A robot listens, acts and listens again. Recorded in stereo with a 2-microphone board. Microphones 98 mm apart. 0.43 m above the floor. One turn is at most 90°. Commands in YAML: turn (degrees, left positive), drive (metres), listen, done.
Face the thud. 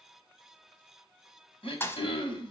turn: 25
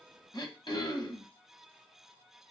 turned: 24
listen: true
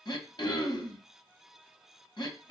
done: "I heard a thud, but can't make it out now. It was about straight ahead or 135° left."